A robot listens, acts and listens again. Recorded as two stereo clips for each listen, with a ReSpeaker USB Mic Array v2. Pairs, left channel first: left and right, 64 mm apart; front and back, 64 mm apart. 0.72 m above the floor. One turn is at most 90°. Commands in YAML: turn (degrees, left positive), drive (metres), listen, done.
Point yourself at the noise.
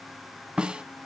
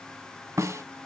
turn: -90
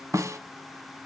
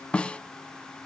turn: -70
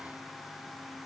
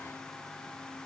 listen: true
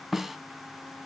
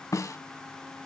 done: "Facing the snare drum, under 1 m away."